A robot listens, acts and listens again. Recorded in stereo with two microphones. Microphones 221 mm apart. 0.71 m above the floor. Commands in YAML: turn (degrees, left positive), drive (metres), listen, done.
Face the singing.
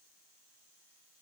listen: true
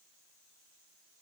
listen: true
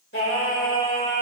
turn: 70
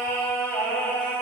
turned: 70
done: "Facing the singing."